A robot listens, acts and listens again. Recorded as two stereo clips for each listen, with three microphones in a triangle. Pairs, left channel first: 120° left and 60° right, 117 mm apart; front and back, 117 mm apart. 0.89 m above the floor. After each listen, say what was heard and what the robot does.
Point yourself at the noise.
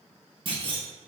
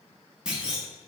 The clunk: 100° right. Turn 100° right.
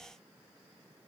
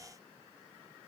Facing where the clunk came from. I can't hear it now.